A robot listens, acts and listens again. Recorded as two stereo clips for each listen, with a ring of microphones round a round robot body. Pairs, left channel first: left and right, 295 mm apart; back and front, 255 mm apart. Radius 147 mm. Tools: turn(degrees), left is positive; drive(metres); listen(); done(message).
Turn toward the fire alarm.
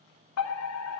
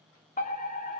turn(degrees=125)
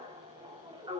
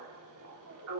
turn(degrees=-15)
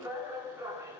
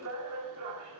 turn(degrees=-10)
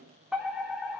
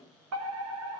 done("Found it: a fire alarm, straight ahead, 2 to 4 m away.")